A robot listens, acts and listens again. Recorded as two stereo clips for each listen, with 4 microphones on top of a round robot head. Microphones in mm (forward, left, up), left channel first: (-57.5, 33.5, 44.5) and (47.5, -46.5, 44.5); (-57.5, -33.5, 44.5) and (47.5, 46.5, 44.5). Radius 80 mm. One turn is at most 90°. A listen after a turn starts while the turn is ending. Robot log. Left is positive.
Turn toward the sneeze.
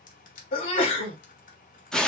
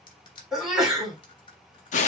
note: The sneeze: 125° left.
cmd yaw +90
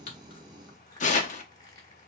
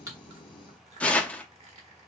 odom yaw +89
note: Nothing new. It was at 35° left.
cmd yaw +35
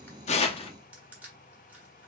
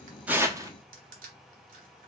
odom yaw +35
end: I heard a sneeze from this way, but can't make it out now.